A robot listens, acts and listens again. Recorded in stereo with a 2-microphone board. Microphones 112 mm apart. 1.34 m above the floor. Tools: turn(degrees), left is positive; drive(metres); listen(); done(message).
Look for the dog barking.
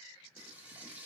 listen()
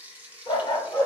turn(degrees=40)
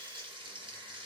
listen()
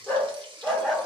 done("Found it: a dog barking, straight ahead.")